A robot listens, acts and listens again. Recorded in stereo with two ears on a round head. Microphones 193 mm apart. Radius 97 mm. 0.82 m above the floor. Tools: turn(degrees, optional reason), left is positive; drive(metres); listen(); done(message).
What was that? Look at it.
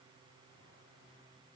listen()
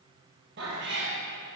turn(degrees=-60, reason="The cat meowing: about 60° right or 120° right.")
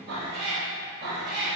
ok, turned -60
turn(degrees=-50, reason="So it is at 50° right.")
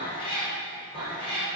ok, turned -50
turn(degrees=25, reason="The cat meowing is now 25° left.")
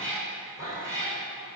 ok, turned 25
turn(degrees=-15, reason="The cat meowing is now 15° right.")
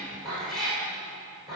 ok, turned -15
done("Facing the cat meowing, over 4 m away.")